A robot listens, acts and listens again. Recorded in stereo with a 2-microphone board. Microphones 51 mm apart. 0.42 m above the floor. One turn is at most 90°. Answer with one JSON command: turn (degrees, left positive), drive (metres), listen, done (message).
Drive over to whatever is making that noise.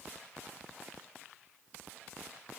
{"listen": true}
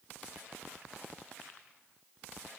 {"listen": true}
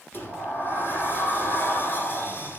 {"turn": 45}
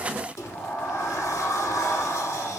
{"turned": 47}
{"turn": 85}
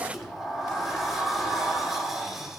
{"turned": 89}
{"drive": 1.0}
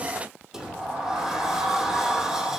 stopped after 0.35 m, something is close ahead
{"turn": -10}
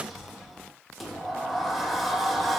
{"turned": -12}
{"done": "Blocked. The sliding door is further on, straight ahead."}